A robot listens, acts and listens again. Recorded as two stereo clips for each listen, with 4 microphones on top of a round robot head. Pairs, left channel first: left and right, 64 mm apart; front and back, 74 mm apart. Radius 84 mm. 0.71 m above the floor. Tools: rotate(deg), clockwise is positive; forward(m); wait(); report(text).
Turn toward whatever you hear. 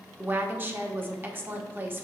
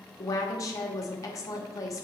rotate(35)
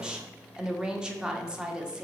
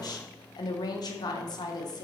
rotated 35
rotate(15)
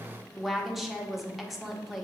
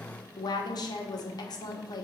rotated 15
report("Found it: a woman speaking, straight ahead, 1 to 2 m away.")